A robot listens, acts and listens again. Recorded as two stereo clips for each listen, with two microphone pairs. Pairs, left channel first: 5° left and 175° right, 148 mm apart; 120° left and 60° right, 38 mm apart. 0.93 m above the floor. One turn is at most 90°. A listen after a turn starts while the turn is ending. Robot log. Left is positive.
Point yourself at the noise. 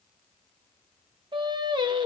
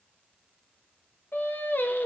note: The singing: 130° left.
cmd yaw +90
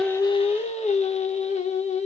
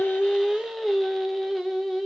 note: The singing is now 30° left.
cmd yaw +30
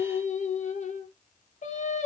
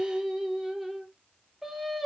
note: The singing is now 25° left.
cmd yaw +25
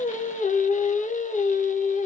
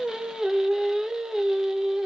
note: The singing is now 15° left.
cmd yaw +15
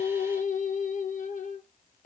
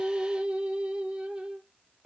end: Found it: singing, straight ahead, under 1 m away.